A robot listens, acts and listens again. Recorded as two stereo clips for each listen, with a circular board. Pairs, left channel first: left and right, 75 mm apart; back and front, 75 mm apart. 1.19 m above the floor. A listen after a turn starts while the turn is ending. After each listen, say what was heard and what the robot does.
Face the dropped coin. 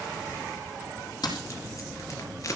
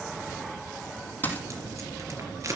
The dropped coin: 115° left. Turn 115° left.
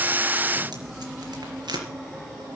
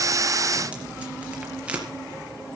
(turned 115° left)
Facing where the dropped coin came from. I can't hear it now.